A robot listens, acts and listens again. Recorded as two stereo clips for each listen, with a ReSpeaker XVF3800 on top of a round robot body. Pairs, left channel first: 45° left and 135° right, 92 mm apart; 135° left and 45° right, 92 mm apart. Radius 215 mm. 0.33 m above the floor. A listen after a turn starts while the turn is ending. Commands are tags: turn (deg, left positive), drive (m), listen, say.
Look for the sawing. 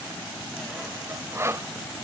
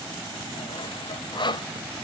<turn deg="165"/>
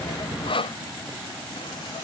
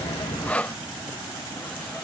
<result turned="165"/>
<turn deg="60"/>
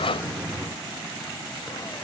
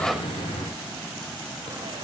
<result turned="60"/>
<listen/>
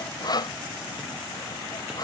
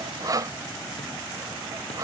<say>Facing the sawing.</say>